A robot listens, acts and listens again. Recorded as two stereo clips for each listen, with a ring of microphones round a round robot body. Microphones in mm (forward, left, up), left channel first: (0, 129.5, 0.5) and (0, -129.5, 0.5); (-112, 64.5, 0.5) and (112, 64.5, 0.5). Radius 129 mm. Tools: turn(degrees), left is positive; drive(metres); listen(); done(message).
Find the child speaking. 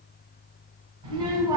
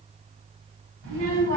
turn(degrees=-15)
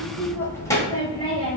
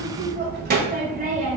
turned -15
turn(degrees=40)
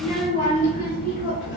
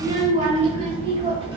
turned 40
turn(degrees=60)
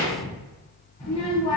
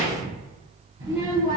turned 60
turn(degrees=15)
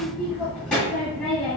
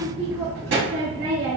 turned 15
done("Found it: a child speaking, straight ahead, 1 to 2 m away.")